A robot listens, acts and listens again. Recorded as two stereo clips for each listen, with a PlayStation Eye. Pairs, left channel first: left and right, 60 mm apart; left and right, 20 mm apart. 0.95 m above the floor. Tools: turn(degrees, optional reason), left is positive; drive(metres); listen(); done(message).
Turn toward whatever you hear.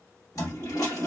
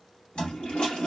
turn(degrees=75, reason="The toilet flushing: about 75° left or 105° left.")
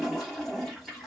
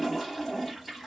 done("Found it: a toilet flushing, straight ahead.")